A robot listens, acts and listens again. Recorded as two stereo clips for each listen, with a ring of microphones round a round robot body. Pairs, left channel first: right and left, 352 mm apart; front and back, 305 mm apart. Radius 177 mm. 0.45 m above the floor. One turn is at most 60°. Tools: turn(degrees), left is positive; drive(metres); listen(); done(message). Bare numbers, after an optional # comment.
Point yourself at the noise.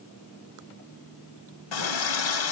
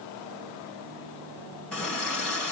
# The running tap: 85° right.
turn(-60)
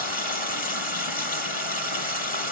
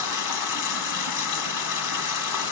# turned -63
# The running tap is now 25° right.
turn(-25)
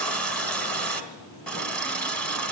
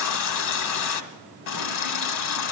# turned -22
done("Facing the running tap, 1 to 2 m away.")